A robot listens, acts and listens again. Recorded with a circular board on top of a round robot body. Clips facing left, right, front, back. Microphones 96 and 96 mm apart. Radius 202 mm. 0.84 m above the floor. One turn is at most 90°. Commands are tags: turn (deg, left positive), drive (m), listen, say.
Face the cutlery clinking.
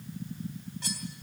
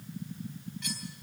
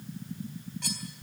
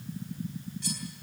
<turn deg="35"/>
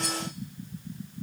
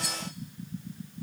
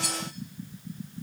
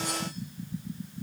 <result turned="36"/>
<say>Found it: cutlery clinking, straight ahead, 2 to 4 m away.</say>